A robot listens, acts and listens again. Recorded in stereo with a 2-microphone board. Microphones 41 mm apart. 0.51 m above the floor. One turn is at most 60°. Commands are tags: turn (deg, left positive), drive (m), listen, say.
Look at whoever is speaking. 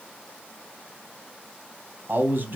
<turn deg="-55"/>
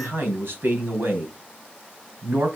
<turn deg="-60"/>
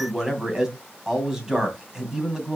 <turn deg="-15"/>
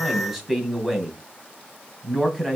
<say>Found it: a man speaking, straight ahead, 2 to 4 m away.</say>